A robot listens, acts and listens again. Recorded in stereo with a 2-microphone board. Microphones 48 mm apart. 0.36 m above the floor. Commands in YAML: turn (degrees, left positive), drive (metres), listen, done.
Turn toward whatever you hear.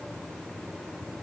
listen: true
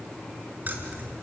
turn: -40
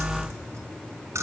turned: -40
turn: -105
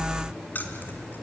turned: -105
turn: 40
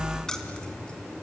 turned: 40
turn: 15
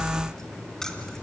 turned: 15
turn: 10
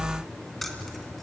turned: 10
done: "Found it: keys jangling, straight ahead, 2 to 4 m away."